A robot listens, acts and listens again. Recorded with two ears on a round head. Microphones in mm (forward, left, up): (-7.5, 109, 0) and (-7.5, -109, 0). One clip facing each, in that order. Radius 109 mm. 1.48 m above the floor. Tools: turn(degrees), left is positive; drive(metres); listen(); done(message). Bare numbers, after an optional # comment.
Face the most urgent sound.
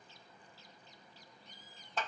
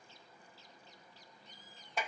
listen()
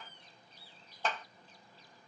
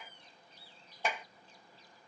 listen()
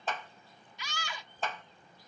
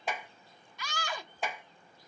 # The scream: about 45° right or 135° right.
turn(-45)
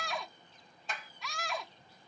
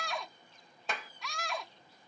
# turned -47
done("Found it: a scream, straight ahead.")